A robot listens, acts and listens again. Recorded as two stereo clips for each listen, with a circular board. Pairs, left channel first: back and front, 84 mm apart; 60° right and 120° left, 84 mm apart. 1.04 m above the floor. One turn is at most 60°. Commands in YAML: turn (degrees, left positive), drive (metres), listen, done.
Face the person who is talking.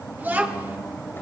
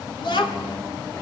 turn: -60
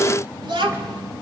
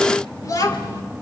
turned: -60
turn: -15
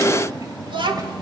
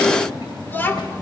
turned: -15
done: "Found it: a child speaking, straight ahead, 2 to 4 m away."